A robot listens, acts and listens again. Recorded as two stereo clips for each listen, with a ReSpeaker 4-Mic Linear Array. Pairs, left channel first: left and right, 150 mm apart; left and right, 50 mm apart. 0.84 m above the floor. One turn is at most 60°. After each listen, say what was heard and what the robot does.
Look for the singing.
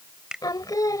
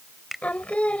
The singing: about 25° left or 155° left. Turn 25° left.
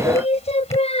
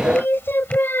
So it is at 135° left. Turn 60° left.
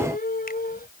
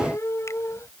The singing is now 75° left. Turn 60° left.
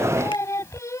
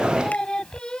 The singing is now 20° left. Turn 20° left.
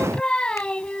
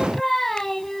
Found it: singing, straight ahead.